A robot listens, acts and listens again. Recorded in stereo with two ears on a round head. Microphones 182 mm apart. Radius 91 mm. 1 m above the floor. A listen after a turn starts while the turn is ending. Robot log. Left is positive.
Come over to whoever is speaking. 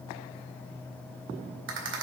cmd idle
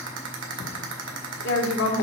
note: The woman speaking: about 60° left or 120° left.
cmd yaw +60
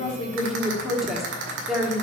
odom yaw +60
cmd fwd 1.0
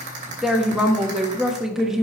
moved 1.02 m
cmd fwd 1.0
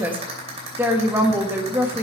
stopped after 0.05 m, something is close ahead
note: The woman speaking is now 10° right.
cmd yaw -10
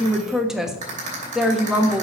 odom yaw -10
end: Arrived at the woman speaking, straight ahead.